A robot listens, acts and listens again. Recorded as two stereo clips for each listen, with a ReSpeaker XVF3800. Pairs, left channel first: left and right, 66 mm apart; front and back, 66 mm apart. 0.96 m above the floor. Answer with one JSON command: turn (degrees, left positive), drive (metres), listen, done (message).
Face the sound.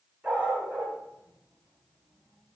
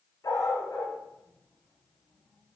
{"turn": -30}
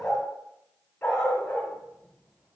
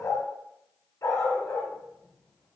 {"turn": 20}
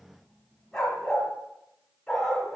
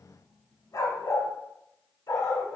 {"done": "Found it: a dog barking, straight ahead."}